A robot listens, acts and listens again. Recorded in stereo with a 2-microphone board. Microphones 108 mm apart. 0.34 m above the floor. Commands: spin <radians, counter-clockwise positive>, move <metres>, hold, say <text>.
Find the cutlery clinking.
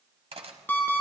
spin -1.05
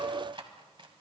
spin -0.87
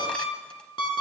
hold
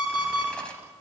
hold
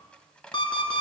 spin 0.17
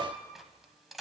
say Facing the cutlery clinking, 1 to 2 m away.